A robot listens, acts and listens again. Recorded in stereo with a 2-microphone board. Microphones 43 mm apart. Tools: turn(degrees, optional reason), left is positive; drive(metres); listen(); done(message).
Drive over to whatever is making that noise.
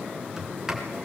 turn(degrees=-30)
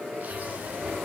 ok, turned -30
listen()
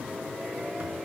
listen()
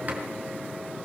done("I heard a sliding door, but can't make it out now. It was about 15° left or 135° right. I did not reach it.")